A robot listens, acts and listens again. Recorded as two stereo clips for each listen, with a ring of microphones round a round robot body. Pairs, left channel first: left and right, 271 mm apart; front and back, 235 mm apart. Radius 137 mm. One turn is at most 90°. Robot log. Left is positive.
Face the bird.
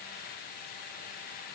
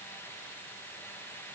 cmd idle
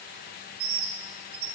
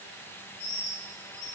note: The bird: 65° right.
cmd yaw -65
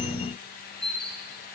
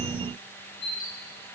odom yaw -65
end: Found it: a bird, straight ahead.